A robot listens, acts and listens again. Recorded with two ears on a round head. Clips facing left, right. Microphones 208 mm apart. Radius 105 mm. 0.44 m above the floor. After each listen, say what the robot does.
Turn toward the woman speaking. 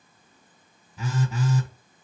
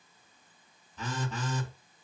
Keep listening.
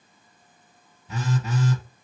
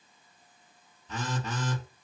Keep listening.
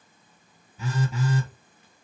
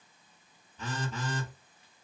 I can't make out a woman speaking, only a phone buzzing.